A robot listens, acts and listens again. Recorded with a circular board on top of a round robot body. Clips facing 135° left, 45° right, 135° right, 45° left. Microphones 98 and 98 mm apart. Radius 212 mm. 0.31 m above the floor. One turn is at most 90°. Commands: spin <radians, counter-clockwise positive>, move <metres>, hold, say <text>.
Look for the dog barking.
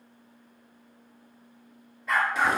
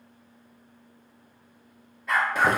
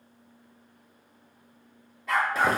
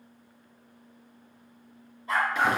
spin -1.57
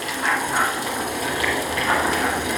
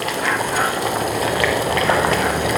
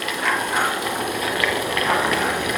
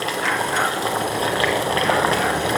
spin -0.70
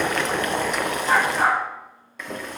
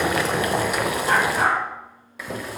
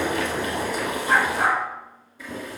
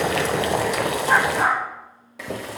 say Found it: a dog barking, straight ahead, over 4 m away.